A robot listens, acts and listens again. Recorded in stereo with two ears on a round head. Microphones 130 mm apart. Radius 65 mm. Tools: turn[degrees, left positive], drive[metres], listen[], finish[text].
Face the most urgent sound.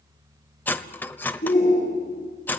Thought: The shout: about 55° left or 125° left.
Action: turn[55]
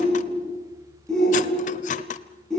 Action: finish[Found it: a shout, straight ahead.]